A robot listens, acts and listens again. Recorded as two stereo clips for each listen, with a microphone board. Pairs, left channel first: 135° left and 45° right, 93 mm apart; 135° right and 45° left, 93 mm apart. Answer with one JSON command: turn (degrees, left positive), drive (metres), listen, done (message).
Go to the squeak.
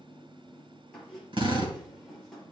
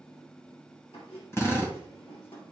{"turn": -140}
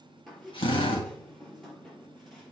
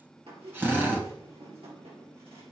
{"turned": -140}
{"turn": 45}
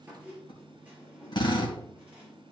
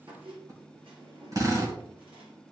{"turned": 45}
{"turn": 30}
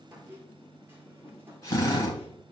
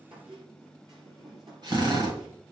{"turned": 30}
{"turn": 15}
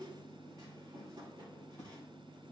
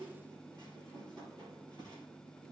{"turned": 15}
{"drive": 1.0}
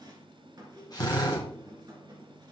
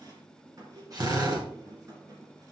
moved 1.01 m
{"drive": 1.0}
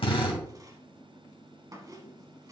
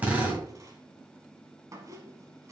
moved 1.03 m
{"drive": 1.0}
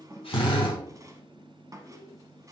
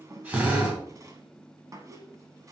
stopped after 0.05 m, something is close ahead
{"done": "Arrived at the squeak, straight ahead."}